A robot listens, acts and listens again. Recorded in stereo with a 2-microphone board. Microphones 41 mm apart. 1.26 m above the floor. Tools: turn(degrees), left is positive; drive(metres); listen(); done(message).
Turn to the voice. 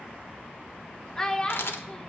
turn(degrees=30)
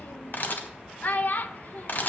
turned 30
turn(degrees=135)
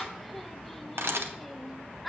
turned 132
done("Facing the child speaking, under 1 m away.")